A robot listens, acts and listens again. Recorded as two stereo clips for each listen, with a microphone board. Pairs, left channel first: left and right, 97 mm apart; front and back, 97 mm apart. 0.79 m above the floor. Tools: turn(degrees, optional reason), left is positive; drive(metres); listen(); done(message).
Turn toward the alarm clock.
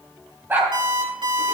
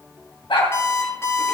turn(degrees=-60, reason="The alarm clock: 60° right.")
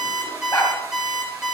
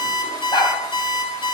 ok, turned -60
turn(degrees=-10, reason="The alarm clock is now 10° right.")
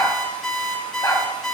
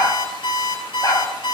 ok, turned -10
done("Facing the alarm clock.")